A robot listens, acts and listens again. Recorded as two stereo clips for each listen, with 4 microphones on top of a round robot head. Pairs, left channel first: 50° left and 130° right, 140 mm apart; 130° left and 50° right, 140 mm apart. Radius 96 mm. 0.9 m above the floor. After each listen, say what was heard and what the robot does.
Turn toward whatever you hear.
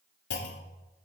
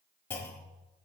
The clunk: 55° left. Turn 55° left.
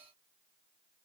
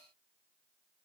Facing where the clunk came from. I can't hear it now.